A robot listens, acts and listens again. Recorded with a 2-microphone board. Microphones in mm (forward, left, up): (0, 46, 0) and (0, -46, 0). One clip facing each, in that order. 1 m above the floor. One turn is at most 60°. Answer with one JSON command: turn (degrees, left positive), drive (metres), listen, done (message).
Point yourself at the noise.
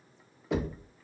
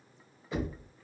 {"turn": 60}
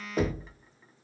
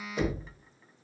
{"turn": 40}
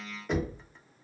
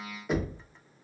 {"done": "Found it: knocking, straight ahead, 1 to 2 m away."}